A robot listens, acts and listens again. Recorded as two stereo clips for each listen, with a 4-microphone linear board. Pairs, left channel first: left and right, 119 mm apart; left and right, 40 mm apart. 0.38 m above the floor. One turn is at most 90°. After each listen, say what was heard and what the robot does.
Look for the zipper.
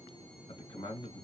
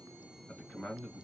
Keep listening.
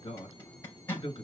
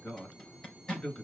The zipper: about 20° left or 160° left. Turn 20° left.
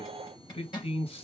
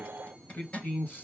So it is at 140° left. Turn 90° left.
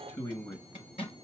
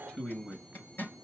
The zipper is now 55° left. Turn 55° left.
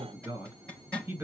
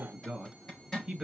The zipper is now 10° left. Turn 10° left.
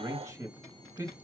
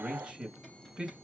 Keep listening.
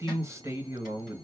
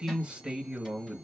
Keep listening.
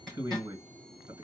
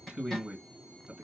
Found it: a zipper, straight ahead, 2 to 4 m away.